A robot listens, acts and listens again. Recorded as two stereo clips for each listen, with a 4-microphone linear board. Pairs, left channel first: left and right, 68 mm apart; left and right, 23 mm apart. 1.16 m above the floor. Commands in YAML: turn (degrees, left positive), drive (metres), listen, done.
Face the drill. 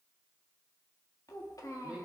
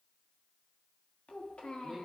listen: true
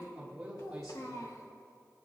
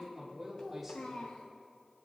listen: true
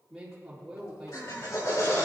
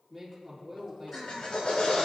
turn: 55
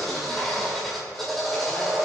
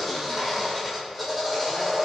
done: "Facing the drill, 2 to 4 m away."